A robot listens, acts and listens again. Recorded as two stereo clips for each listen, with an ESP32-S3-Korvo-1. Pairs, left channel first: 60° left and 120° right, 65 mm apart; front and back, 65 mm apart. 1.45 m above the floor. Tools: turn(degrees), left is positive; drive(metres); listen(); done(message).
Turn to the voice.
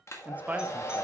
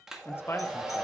turn(degrees=-55)
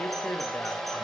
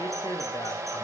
listen()
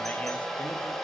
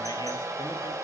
listen()
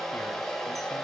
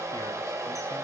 done("I heard a man speaking from this way, but can't make it out now.")